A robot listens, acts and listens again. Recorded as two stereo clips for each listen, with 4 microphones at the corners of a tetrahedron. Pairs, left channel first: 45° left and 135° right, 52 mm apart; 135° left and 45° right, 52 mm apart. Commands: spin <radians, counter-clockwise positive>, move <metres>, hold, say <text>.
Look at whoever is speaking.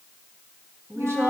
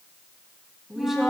spin -2.27
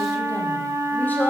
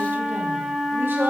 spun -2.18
hold
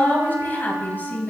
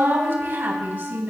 say Facing the woman speaking.